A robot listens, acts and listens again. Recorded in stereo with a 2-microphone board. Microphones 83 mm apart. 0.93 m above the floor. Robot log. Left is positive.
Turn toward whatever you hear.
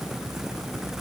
cmd idle
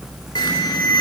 note: The alarm: about 60° left or 120° left.
cmd yaw +60
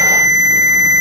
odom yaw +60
note: So it is at 55° left.
cmd yaw +55
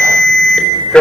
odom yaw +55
note: The alarm is now 15° left.
cmd yaw +15
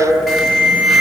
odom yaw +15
end: Facing the alarm, over 4 m away.